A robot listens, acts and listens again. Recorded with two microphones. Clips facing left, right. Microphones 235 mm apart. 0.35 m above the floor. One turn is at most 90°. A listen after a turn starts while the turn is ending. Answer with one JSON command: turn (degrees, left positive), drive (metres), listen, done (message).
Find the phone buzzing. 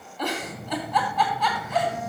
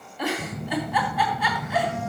{"turn": -75}
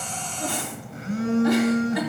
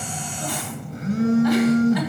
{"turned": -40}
{"turn": -45}
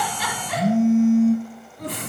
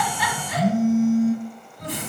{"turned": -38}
{"done": "Facing the phone buzzing."}